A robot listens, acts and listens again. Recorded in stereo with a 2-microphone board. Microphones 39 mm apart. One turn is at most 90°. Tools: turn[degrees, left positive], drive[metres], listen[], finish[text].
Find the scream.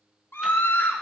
Thought: The scream: about 65° left or 115° left.
Action: turn[65]
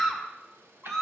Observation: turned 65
Action: finish[Facing the scream, 1 to 2 m away.]